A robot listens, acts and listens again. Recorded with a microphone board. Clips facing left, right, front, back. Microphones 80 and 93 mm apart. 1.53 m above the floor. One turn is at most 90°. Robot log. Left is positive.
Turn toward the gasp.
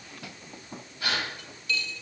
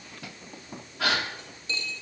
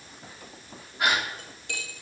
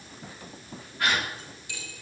note: The gasp: 75° right.
cmd yaw -75
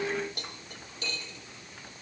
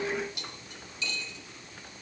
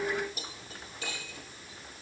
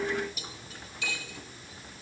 end: Facing where the gasp came from. I can't hear it now.